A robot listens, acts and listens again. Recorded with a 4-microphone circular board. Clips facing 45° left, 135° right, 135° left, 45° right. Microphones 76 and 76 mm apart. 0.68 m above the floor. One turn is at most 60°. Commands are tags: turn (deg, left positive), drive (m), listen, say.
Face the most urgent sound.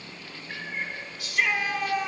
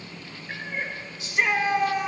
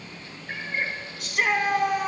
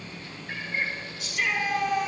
<turn deg="60"/>
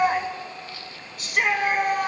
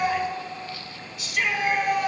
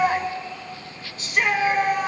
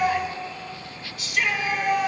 <turn deg="60"/>
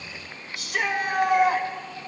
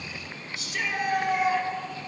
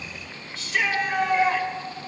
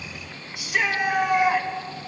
<turn deg="30"/>
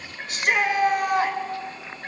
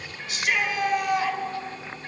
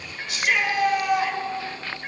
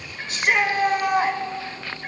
<say>Facing the shout, 2 to 4 m away.</say>